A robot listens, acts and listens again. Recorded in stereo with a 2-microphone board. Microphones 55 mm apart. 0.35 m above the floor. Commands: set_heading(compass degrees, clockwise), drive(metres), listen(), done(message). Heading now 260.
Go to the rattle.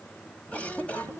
listen()
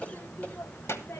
listen()
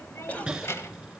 set_heading(290)
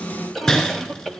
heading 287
set_heading(272)
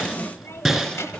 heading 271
drive(1.0)
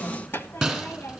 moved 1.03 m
drive(1.0)
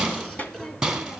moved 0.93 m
drive(1.0)
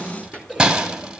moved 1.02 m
set_heading(281)
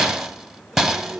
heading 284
drive(1.0)
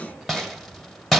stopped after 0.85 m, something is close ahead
done("I am next to the rattle.")